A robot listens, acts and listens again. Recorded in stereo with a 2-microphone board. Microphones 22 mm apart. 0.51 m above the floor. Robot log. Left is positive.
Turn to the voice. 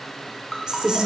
note: The woman speaking: about 40° right or 140° right.
cmd yaw -40
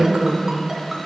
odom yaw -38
note: So it is at 90° right.
cmd yaw -90
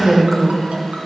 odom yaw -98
end: Found it: a woman speaking, straight ahead.